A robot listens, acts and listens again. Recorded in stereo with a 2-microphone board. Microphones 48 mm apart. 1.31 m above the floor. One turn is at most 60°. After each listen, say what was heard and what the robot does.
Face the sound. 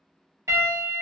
The piano: about 70° right or 110° right. Turn 60° right.
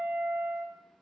So it is at 40° right. Turn 40° right.
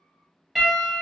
Found it: a piano, straight ahead.